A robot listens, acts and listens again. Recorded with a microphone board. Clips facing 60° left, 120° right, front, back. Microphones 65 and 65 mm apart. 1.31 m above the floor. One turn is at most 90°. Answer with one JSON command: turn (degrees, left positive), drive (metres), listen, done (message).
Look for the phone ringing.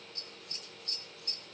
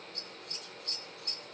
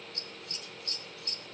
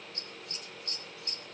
{"listen": true}
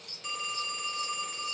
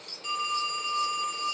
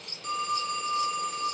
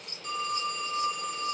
{"turn": -25}
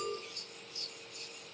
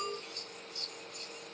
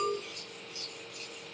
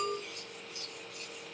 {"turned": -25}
{"listen": true}
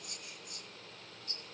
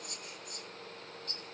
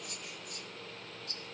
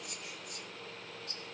{"listen": true}
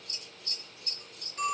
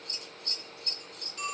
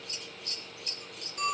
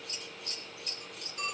{"done": "Found it: a phone ringing, straight ahead, 2 to 4 m away."}